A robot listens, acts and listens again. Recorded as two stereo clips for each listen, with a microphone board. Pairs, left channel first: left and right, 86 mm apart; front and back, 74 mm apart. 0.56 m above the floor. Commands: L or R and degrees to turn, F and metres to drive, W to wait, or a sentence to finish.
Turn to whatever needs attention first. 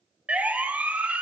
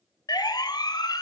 R15
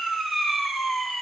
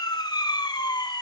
Facing the siren, 2 to 4 m away.